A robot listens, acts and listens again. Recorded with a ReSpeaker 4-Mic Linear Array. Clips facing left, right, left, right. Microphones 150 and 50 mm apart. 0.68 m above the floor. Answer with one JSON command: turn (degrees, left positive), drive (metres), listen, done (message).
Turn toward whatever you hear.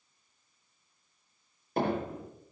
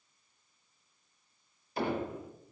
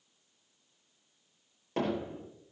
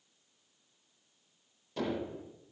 {"turn": 55}
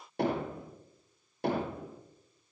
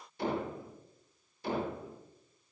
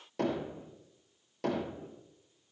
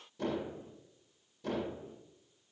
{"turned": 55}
{"turn": 70}
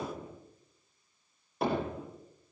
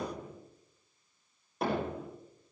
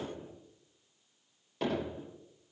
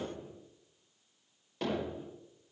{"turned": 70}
{"done": "Found it: hammering, straight ahead."}